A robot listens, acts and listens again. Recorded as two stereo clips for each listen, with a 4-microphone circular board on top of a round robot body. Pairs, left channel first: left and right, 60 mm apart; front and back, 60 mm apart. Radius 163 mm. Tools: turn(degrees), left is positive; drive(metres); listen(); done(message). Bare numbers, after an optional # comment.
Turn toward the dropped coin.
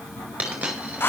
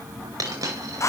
# The dropped coin: 160° right.
turn(-160)
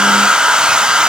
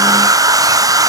done("I heard a dropped coin from this way, but can't make it out now.")